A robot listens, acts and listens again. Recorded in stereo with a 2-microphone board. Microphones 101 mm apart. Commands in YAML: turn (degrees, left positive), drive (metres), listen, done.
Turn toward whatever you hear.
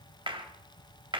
turn: -60
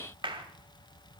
turn: -60
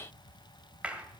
turn: -10
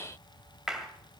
done: "Found it: a clap, straight ahead."